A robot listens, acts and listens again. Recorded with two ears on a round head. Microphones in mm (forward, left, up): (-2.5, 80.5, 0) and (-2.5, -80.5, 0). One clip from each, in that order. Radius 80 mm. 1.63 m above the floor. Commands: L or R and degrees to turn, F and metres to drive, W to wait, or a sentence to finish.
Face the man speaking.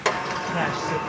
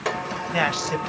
R65
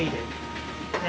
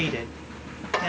R30
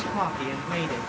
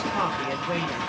Found it: a man speaking, straight ahead, 2 to 4 m away.